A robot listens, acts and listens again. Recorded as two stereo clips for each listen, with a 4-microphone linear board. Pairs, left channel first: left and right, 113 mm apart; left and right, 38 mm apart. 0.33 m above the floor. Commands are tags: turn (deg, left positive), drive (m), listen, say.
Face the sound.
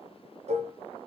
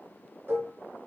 <turn deg="-90"/>
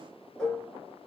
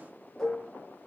<say>Found it: dishes clattering, straight ahead, 2 to 4 m away.</say>